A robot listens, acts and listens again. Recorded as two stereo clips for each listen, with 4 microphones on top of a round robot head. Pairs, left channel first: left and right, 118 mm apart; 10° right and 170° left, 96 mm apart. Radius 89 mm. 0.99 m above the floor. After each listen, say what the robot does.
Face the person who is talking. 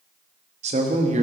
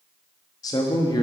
Turn 65° right.
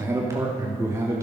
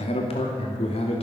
Turn 20° right.
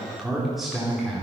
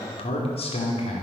Found it: a man speaking, straight ahead.